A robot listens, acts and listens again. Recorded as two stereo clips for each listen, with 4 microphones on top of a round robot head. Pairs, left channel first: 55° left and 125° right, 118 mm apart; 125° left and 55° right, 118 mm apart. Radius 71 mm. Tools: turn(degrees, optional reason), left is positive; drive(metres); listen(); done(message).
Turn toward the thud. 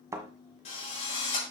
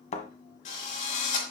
turn(degrees=165, reason="The thud: 165° left.")
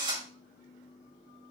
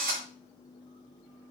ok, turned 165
done("Facing where the thud came from. I can't hear it now.")